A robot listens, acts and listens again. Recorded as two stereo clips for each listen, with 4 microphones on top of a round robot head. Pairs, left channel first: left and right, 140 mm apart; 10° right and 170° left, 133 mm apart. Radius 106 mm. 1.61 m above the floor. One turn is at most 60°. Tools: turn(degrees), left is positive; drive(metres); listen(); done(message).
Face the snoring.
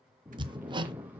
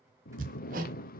turn(degrees=-10)
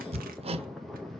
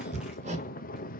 done("Found it: snoring, straight ahead, under 1 m away.")